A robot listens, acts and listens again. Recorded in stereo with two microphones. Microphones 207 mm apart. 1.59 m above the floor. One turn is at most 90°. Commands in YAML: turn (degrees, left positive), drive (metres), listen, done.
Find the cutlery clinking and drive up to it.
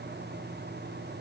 listen: true
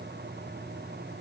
listen: true
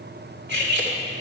turn: -55
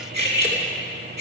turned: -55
turn: -60
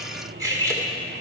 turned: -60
turn: -15
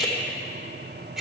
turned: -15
drive: 1.0
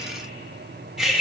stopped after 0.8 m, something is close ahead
done: "I am next to the cutlery clinking."